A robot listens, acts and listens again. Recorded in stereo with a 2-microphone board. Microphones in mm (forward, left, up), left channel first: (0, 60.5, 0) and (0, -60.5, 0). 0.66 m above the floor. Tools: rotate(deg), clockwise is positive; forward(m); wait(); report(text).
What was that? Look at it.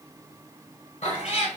rotate(-55)
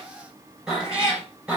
rotate(10)
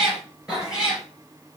rotate(10)
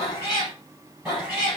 report("Found it: a cat meowing, straight ahead, 2 to 4 m away.")